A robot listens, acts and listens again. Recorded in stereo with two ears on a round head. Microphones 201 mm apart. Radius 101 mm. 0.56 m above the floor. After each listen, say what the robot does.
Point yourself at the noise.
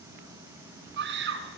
Turn 55° right.
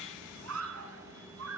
Turn 75° right.
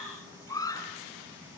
Turn 15° left.
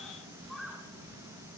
Found it: a scream, straight ahead, over 4 m away.